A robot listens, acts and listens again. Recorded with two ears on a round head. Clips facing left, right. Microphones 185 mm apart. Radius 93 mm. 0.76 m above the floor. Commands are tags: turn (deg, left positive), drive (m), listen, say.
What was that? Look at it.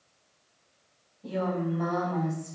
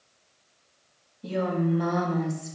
<turn deg="-30"/>
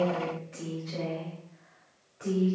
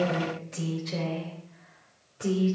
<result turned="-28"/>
<turn deg="-130"/>
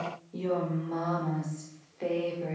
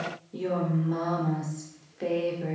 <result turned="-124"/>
<turn deg="-10"/>
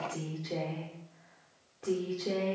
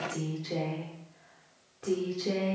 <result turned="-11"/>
<say>Found it: a woman speaking, straight ahead.</say>